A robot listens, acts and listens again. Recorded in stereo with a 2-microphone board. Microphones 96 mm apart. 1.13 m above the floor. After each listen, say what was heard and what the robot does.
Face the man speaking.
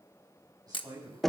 The man speaking: about 40° right or 140° right. Turn 40° right.
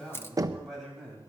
Found it: a man speaking, straight ahead.